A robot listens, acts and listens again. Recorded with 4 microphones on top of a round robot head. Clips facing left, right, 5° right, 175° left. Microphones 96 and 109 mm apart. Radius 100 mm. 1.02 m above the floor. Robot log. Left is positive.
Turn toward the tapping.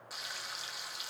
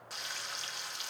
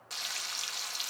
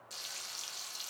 cmd idle
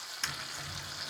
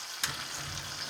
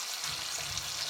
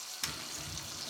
note: The tapping: 170° right.
cmd yaw -170
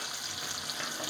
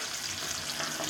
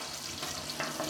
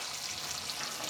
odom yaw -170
cmd idle
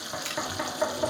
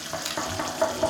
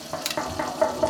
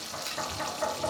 note: The tapping is now 10° right.
cmd yaw -10
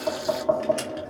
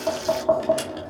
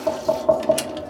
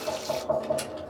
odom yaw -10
end: Facing the tapping, 2 to 4 m away.